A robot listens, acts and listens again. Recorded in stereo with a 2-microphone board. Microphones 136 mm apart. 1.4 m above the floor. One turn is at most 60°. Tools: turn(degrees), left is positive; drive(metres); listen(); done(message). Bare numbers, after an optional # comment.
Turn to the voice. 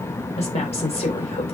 # The woman speaking: about 50° left or 130° left.
turn(50)
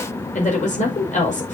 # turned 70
# So it is at 65° left.
turn(60)
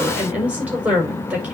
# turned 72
# The woman speaking is now 10° right.
turn(-10)
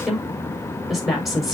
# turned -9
done("Facing the woman speaking.")